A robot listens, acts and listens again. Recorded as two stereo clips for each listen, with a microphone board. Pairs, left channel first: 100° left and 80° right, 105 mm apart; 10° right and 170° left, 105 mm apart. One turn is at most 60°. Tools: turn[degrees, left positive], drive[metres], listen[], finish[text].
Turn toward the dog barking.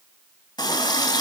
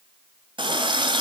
Action: listen[]
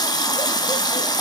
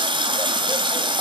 Action: listen[]
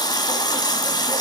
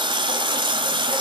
Action: finish[I can't make out a dog barking, only a running tap.]